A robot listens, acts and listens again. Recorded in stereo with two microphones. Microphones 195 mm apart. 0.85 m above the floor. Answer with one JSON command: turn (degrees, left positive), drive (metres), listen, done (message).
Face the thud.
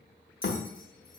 {"turn": 55}
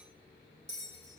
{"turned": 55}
{"listen": true}
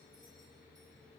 {"done": "I heard a thud, but can't make it out now. It was about straight ahead or 70° left."}